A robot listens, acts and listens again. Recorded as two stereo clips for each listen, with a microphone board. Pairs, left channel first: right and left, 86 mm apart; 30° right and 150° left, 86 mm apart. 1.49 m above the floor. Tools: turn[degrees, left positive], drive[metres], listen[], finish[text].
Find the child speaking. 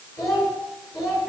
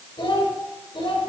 Thought: The child speaking: 40° right.
Action: turn[-40]
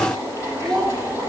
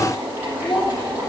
Thought: The child speaking is now 10° right.
Action: turn[-10]
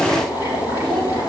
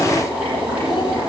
Action: listen[]
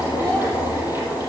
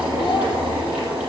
Action: listen[]
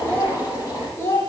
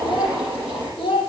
Thought: The child speaking is now 30° right.
Action: turn[-30]
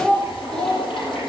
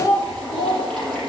Thought: The child speaking is now 10° right.
Action: turn[-10]
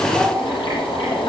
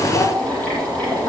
Action: listen[]
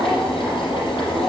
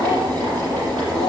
Action: listen[]
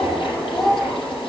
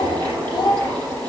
Action: finish[Facing the child speaking.]